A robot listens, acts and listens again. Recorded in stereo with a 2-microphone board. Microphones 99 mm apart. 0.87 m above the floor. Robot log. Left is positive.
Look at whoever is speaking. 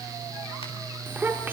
note: The child speaking: about 20° right or 160° right.
cmd yaw -20
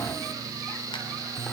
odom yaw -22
cmd idle
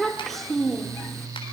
end: Facing the child speaking.